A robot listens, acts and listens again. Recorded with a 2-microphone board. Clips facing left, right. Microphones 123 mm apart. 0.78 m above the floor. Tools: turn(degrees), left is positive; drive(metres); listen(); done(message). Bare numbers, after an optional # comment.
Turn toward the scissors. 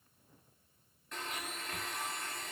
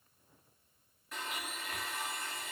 listen()
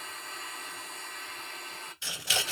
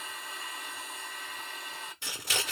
# The scissors: about 45° right or 135° right.
turn(-45)
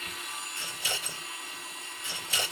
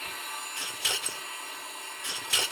# So it is at 85° right.
turn(-85)
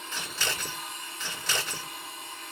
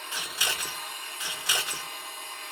# The scissors is now 15° right.
turn(-15)
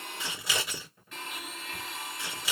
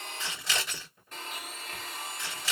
done("Facing the scissors, 1 to 2 m away.")